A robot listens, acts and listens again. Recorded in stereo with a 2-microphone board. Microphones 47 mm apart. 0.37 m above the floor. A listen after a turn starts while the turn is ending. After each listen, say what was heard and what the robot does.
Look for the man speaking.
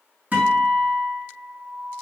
Keep listening.
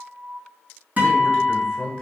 Turn 30° left.
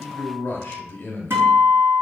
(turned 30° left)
So it is at 150° left. Turn 150° left.
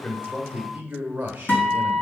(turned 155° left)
The man speaking is now 20° right. Turn 20° right.
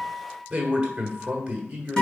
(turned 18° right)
Facing the man speaking.